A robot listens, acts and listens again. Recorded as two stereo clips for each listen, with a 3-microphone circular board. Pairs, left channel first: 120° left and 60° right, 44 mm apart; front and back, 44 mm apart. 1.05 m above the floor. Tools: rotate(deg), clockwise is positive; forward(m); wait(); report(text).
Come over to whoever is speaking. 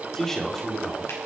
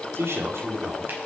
rotate(160)
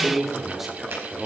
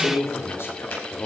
rotate(-25)
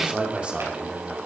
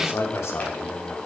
forward(1.0)
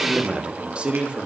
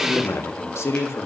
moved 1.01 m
forward(1.0)
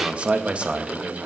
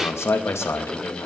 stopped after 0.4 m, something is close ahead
report("Arrived at the man speaking, straight ahead.")